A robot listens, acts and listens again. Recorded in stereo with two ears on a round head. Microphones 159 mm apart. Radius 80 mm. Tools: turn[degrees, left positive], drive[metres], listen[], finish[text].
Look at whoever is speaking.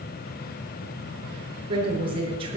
Thought: The woman speaking: about 30° right or 150° right.
Action: turn[-30]
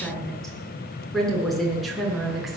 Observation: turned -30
Action: finish[Found it: a woman speaking, straight ahead.]